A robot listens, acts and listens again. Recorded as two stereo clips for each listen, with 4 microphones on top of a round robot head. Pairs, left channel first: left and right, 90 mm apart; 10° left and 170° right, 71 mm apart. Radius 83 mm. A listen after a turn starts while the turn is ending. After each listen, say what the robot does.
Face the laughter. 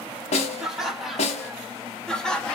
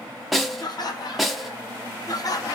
Turn 15° left.
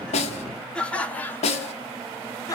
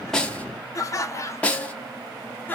Turn 65° left.
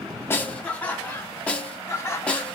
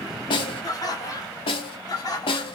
Turn 30° left.
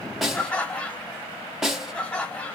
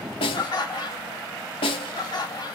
Turn 10° left.
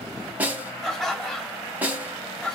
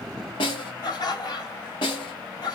Found it: laughter, straight ahead, 1 to 2 m away.